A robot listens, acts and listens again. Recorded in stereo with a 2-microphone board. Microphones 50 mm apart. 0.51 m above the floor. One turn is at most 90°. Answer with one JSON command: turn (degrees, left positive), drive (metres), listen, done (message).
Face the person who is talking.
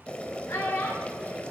{"turn": 90}
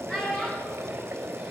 {"done": "Found it: a child speaking, straight ahead."}